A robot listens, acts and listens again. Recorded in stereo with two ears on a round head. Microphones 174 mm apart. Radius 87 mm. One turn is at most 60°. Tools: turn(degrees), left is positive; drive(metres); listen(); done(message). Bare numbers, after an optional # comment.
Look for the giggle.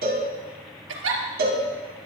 # The giggle: about 75° right or 105° right.
turn(-60)
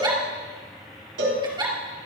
# So it is at 25° right.
turn(-25)
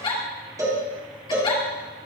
# The giggle is now 25° left.
turn(25)
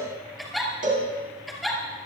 done("Found it: a giggle, straight ahead.")